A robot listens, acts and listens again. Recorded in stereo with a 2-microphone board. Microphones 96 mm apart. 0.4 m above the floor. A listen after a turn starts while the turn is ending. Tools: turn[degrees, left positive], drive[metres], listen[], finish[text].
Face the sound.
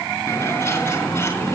Thought: The bird: about 25° left or 155° left.
Action: turn[25]
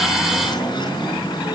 Thought: So it is at 130° left.
Action: turn[130]
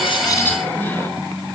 Action: listen[]
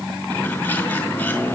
Thought: The bird is now 20° left.
Action: turn[20]
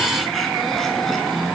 Action: listen[]
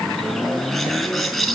Action: finish[Found it: a bird, straight ahead, 2 to 4 m away.]